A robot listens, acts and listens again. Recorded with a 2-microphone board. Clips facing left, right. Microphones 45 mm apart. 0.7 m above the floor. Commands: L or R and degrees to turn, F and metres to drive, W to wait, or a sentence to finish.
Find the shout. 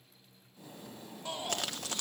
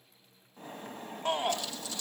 R55
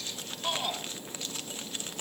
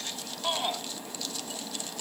R20
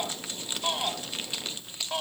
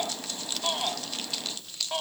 Facing the shout, 1 to 2 m away.